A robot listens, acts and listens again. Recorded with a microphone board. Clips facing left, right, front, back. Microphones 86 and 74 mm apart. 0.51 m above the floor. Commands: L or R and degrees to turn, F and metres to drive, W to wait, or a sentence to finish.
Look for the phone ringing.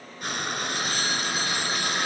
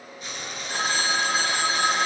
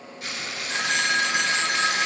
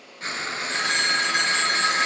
R85
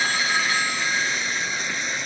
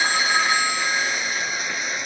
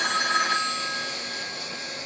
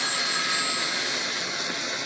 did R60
R25
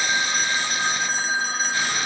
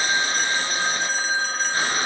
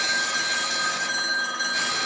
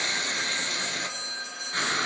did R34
Facing the phone ringing, 2 to 4 m away.